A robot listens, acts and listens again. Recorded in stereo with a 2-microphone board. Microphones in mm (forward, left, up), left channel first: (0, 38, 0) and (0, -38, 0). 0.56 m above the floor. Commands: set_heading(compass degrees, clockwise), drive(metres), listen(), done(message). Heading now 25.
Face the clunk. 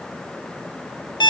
listen()
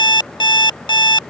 listen()
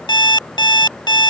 done("I can't make out a clunk, only an alarm clock.")